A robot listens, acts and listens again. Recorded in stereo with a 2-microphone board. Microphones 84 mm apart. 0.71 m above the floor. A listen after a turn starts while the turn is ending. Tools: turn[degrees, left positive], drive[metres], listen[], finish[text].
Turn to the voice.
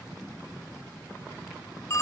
Action: listen[]
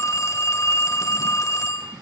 Action: listen[]
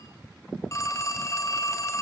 Action: finish[I can't make out anyone speaking, only a phone ringing.]